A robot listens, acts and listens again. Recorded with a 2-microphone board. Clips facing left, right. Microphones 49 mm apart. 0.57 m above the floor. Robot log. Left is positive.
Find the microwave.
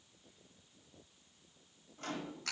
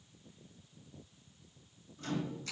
note: The microwave: about 50° left or 130° left.
cmd yaw +50
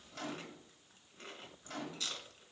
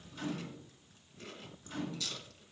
note: So it is at 80° left.
cmd yaw +80
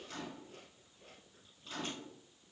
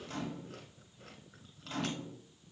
note: The microwave is now 30° right.
cmd yaw -30
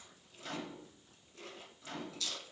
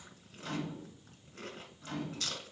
end: Found it: a microwave, straight ahead.